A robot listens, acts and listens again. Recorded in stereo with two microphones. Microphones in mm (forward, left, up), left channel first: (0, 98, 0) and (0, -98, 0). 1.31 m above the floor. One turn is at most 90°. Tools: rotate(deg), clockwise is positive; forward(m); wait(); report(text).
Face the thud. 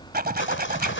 wait()
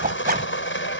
wait()
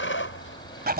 report("I can't make out a thud, only a zipper and sawing.")